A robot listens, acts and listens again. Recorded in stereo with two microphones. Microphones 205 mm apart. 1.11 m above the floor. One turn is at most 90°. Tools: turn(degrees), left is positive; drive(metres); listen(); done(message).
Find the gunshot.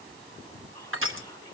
listen()
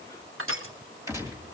turn(degrees=-30)
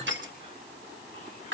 listen()
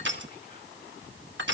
done("I heard a gunshot, but can't make it out now. It was about 15° left or 135° right.")